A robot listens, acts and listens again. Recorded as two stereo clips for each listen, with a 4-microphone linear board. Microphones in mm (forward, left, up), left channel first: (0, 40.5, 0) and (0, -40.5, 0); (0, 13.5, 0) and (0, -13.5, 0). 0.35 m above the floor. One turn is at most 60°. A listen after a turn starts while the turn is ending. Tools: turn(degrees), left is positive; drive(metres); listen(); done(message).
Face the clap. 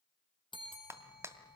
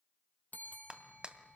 turn(degrees=-35)
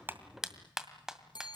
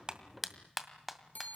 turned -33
done("Facing the clap.")